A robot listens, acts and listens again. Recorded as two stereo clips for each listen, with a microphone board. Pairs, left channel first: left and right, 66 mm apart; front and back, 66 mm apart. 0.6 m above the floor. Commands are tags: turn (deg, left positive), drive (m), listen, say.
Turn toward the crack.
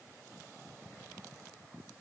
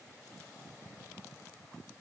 <listen/>
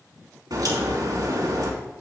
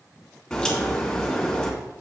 <turn deg="-80"/>
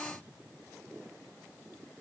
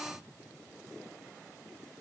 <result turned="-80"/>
<say>I heard a crack from this way, but can't make it out now.</say>